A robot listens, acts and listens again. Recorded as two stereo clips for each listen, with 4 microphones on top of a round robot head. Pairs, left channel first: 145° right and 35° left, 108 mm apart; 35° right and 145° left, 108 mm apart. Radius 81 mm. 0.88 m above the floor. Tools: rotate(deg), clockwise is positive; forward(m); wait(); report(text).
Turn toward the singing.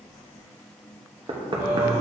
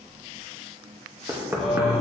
rotate(-60)
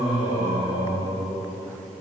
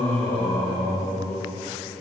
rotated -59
rotate(-15)
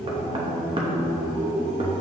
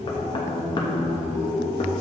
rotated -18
report("Facing the singing, 2 to 4 m away.")